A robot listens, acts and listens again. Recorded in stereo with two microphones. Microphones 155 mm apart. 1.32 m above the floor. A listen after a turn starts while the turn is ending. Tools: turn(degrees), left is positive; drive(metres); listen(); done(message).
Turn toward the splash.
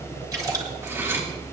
turn(degrees=-25)
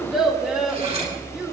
listen()
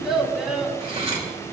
done("I heard a splash, but can't make it out now. It was about straight ahead or 130° right.")